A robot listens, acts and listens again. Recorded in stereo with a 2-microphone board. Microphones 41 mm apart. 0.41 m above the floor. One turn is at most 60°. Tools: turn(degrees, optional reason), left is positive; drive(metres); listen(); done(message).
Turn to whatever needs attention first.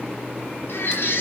turn(degrees=60, reason="The baby crying: about 65° left or 115° left.")
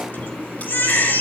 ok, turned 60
turn(degrees=55, reason="So it is at 55° left.")
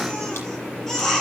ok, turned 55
turn(degrees=10, reason="The baby crying is now 10° left.")
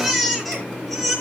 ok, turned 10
done("Facing the baby crying.")